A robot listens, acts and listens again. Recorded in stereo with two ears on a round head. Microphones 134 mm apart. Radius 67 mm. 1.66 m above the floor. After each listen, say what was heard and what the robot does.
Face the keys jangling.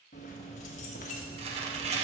The keys jangling: about 50° left or 130° left. Turn 50° left.
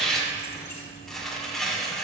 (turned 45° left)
So it is at 20° left. Turn 20° left.
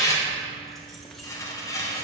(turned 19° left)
Found it: keys jangling, straight ahead, 1 to 2 m away.